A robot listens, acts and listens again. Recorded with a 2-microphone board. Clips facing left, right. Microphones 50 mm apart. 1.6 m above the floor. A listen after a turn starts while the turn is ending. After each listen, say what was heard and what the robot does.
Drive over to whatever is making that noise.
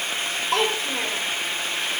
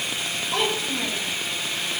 Turn 90° left.
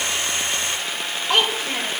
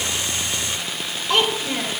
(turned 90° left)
So it is at 10° left. Turn 10° left.
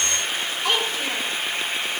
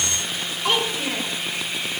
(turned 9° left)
Drive 1.0 m forward.
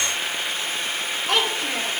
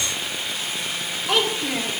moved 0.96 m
Drive 1.0 m forward.
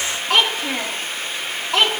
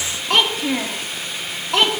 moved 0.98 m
Drive 1.0 m forward.
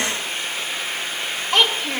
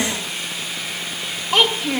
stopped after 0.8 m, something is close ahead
I am next to the child speaking.